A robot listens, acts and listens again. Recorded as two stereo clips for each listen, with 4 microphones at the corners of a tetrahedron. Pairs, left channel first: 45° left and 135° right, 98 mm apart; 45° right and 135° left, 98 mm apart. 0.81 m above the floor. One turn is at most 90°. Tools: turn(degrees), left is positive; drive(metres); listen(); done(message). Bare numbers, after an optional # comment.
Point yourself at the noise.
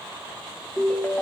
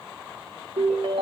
# The ringtone: 115° left.
turn(90)
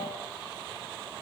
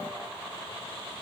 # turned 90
# Nothing new. It was at 25° left.
turn(25)
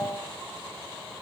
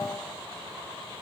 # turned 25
listen()
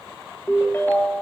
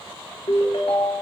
# The ringtone is now 20° right.
turn(-20)
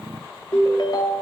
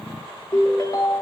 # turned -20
done("Facing the ringtone, under 1 m away.")